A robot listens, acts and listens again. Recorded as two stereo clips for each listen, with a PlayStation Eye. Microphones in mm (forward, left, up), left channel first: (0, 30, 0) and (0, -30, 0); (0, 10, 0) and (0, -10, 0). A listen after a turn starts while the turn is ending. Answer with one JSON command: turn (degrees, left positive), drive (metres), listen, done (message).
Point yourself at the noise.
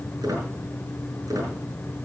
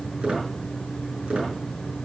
{"turn": -90}
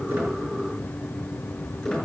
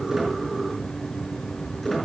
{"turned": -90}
{"turn": 10}
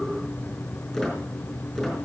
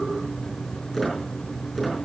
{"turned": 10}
{"done": "Facing the squeak."}